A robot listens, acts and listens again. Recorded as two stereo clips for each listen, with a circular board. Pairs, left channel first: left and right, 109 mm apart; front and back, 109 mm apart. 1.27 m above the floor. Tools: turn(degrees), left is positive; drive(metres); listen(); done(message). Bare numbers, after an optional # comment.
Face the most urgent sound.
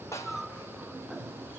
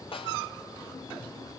listen()
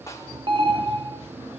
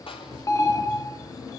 # The alarm: 55° right.
turn(-55)
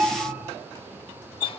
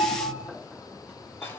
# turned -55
# The alarm is now 20° right.
turn(-20)
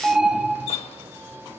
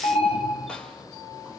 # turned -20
done("Facing the alarm.")